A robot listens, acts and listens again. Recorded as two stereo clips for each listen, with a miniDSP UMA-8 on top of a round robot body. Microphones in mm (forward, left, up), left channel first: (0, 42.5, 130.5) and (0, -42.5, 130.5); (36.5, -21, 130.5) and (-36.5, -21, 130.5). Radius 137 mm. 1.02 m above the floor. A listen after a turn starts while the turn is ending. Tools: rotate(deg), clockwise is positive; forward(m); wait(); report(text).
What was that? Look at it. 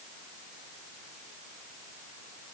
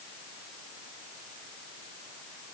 wait()
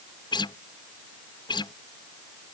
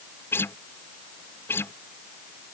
rotate(-60)
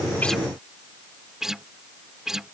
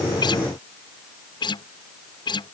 report("Found it: a guitar, straight ahead.")